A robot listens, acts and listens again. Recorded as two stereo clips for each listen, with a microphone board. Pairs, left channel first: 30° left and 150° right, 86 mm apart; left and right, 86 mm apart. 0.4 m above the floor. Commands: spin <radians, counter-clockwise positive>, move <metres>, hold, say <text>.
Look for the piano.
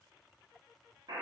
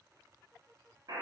hold
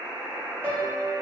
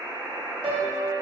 spin -1.66
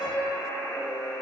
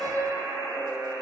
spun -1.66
say Found it: a piano, straight ahead.